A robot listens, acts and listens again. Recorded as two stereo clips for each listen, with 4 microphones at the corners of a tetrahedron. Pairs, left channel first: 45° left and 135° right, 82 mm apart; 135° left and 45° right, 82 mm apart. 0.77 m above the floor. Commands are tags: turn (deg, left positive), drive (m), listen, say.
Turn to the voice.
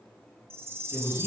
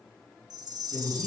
<turn deg="140"/>
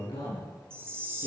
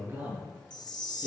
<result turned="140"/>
<turn deg="20"/>
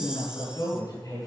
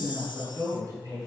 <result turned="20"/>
<say>Facing the man speaking, over 4 m away.</say>